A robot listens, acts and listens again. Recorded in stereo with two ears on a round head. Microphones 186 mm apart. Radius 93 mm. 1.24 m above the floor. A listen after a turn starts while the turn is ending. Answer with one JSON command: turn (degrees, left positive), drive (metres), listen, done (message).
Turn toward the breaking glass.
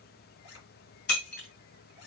{"turn": 50}
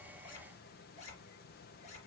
{"listen": true}
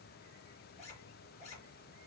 {"done": "I heard breaking glass, but can't make it out now. It was about straight ahead or 80° left."}